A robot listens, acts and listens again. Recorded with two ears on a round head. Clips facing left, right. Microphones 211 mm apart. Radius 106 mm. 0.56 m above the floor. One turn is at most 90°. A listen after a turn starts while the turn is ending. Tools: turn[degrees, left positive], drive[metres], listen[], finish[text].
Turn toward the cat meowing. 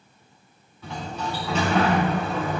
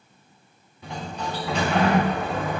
Action: listen[]
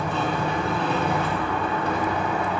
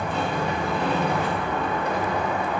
Action: listen[]
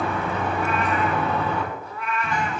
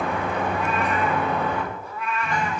Action: turn[-90]
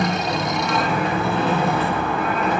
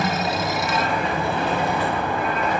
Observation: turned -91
Action: listen[]
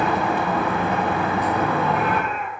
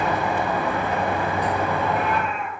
Action: finish[Facing the cat meowing.]